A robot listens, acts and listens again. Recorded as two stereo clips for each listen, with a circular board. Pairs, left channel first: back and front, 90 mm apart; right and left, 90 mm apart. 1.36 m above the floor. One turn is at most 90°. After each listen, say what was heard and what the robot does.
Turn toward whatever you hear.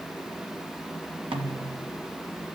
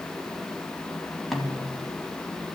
Facing the snare drum.